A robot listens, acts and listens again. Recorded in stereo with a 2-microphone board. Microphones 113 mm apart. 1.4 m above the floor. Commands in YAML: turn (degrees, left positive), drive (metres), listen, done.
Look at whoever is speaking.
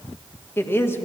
turn: 20
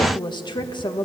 turn: 140
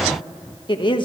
turn: 45
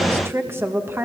turn: -20
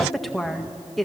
done: "Found it: a woman speaking, straight ahead."